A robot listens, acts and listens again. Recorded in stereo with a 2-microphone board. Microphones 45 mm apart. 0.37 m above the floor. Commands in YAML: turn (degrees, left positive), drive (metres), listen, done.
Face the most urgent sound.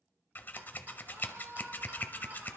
turn: -90
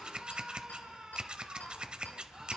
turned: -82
turn: -10
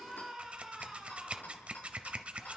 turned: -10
done: "Found it: a scream, straight ahead, over 4 m away."